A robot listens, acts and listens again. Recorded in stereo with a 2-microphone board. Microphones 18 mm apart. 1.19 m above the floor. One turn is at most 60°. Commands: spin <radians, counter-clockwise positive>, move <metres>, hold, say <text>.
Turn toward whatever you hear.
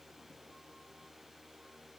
hold
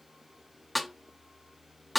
spin 0.52
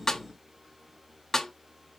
spin 1.05
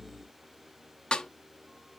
spin 1.05
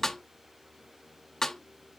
spin 0.61
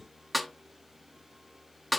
say Found it: a snare drum, straight ahead.